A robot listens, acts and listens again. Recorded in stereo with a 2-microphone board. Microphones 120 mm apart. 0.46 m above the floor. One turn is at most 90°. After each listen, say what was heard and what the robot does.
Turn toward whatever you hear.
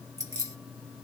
The keys jangling: about 25° right or 155° right. Turn 25° right.
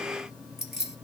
Found it: keys jangling, straight ahead.